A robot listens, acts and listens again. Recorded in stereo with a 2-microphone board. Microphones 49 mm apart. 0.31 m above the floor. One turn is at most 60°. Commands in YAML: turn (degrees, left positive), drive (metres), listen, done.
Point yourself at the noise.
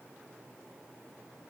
listen: true
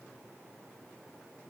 listen: true
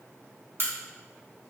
turn: -50
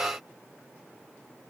listen: true
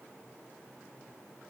done: "I heard a crack, but can't make it out now. It was about straight ahead or 80° right."